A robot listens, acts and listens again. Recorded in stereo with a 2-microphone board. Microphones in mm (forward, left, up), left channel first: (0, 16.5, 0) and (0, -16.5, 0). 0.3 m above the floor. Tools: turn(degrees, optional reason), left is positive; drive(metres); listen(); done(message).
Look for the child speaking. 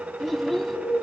turn(degrees=30)
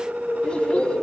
listen()
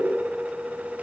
listen()
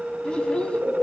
turn(degrees=150, reason="So it is at 150° left.")
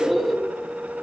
listen()
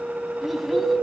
listen()
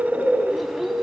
done("Found it: a child speaking, straight ahead, 1 to 2 m away.")